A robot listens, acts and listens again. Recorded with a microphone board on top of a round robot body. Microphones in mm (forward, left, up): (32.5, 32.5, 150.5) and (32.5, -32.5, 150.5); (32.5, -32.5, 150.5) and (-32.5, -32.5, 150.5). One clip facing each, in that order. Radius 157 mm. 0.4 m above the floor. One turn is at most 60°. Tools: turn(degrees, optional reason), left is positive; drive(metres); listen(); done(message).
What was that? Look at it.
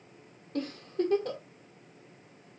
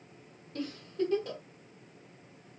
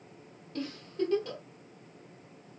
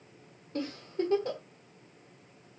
turn(degrees=60, reason="The giggle: 120° left.")
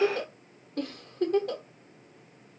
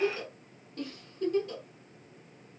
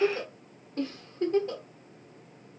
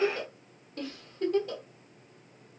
turn(degrees=60, reason="The giggle is now 60° left.")
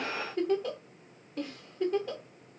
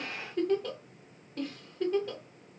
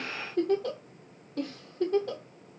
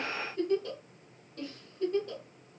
done("Found it: a giggle, straight ahead.")